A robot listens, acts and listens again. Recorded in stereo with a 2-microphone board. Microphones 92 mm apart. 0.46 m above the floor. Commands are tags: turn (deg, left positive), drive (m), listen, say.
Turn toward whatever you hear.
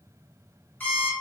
<turn deg="20"/>
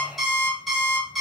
<say>Found it: an alarm clock, straight ahead.</say>